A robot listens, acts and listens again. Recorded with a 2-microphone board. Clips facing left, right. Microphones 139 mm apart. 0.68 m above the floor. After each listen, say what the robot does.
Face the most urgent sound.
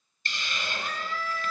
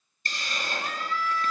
Turn 40° left.
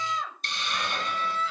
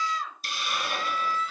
Turn 100° left.
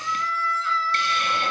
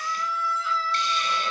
Turn 15° right.
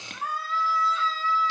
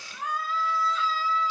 Facing the scream, over 4 m away.